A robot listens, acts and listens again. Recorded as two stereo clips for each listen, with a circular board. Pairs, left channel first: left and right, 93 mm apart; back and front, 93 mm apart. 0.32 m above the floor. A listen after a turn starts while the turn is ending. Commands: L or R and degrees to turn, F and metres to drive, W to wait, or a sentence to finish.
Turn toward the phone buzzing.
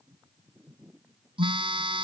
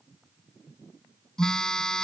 R100
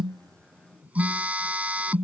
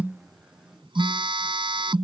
R15
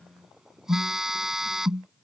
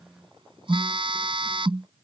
Facing the phone buzzing.